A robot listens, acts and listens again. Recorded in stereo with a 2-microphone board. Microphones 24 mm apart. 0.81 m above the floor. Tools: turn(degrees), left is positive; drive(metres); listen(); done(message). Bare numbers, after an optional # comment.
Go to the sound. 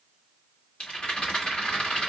# The rattle: about 45° left or 135° left.
turn(45)
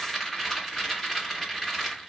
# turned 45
drive(1.0)
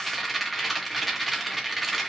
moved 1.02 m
drive(1.0)
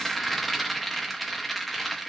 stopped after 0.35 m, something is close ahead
done("I am next to the rattle.")